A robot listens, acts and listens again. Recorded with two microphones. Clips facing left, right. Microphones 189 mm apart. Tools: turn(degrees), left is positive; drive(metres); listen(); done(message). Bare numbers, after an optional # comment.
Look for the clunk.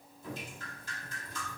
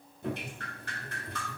listen()
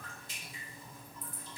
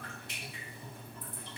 listen()
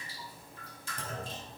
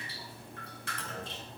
# The clunk: about 45° left or 135° left.
turn(45)
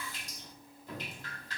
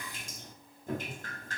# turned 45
listen()
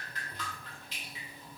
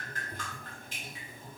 done("I heard a clunk, but can't make it out now. It was about straight ahead or 90° left.")